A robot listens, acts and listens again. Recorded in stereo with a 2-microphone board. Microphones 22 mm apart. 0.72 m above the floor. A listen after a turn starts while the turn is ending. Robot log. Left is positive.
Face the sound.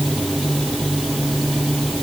cmd idle
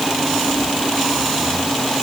cmd idle
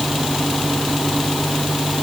end: I can't make out anything.